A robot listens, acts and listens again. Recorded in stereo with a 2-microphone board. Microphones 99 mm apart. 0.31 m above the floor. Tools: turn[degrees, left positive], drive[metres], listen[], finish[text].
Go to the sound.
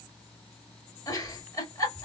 Thought: The giggle: about 35° left or 145° left.
Action: turn[35]
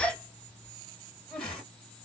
Thought: So it is at 10° left.
Action: turn[10]
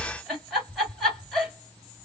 Action: drive[1.0]
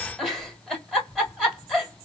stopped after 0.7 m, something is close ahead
Action: finish[I am next to the giggle.]